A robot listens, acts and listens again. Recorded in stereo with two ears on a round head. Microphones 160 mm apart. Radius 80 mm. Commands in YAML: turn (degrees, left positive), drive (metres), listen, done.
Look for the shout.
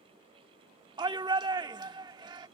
turn: -25
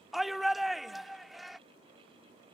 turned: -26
done: "Found it: a shout, straight ahead."